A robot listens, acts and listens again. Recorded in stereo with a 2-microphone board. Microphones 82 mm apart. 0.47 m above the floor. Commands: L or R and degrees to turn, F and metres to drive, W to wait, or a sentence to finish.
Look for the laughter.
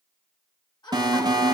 L65
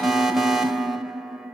W
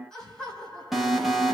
L10
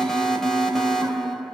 W
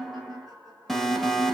Facing the laughter, 2 to 4 m away.